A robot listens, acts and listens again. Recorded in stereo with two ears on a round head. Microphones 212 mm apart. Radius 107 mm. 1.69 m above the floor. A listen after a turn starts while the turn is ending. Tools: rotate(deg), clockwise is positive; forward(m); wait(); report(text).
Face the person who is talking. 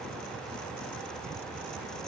wait()
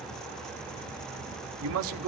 rotate(65)
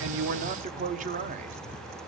rotate(35)
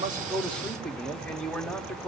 report("Facing the man speaking, under 1 m away.")